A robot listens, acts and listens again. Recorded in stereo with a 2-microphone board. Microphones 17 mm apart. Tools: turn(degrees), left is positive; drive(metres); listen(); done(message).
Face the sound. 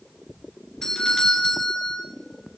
turn(degrees=40)
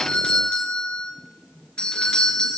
turn(degrees=95)
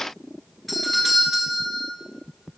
done("Found it: a doorbell, straight ahead.")